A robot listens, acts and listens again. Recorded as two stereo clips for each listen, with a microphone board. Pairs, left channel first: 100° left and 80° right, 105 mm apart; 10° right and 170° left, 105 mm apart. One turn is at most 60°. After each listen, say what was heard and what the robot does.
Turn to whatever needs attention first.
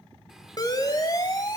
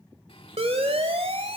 The siren: 150° left. Turn 60° left.
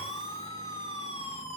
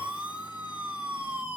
The siren is now 95° left. Turn 60° left.
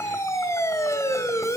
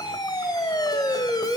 The siren is now 40° left. Turn 40° left.
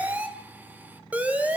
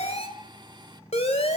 Facing the siren.